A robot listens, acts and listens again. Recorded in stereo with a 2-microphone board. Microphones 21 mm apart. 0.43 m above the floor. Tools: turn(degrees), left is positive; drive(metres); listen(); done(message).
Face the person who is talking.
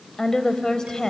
turn(degrees=30)
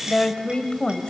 turn(degrees=115)
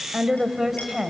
turn(degrees=-15)
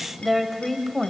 done("Found it: a woman speaking, straight ahead.")